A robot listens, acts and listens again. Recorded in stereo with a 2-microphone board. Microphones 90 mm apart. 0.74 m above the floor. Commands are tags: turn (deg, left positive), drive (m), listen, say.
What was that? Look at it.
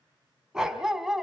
<turn deg="30"/>
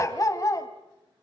<turn deg="140"/>
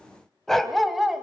<say>Facing the dog barking, 1 to 2 m away.</say>